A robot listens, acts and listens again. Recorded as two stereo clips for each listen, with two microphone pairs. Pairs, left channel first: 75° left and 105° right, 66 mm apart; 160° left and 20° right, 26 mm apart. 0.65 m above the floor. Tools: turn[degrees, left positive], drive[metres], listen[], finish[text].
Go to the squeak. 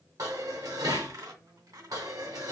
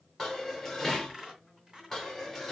Thought: The squeak: 90° right.
Action: turn[-90]
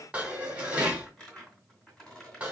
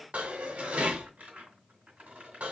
Action: drive[1.0]
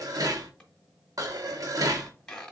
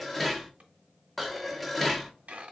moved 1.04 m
Action: drive[1.0]
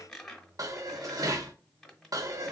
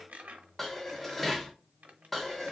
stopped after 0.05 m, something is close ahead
Action: finish[I am next to the squeak.]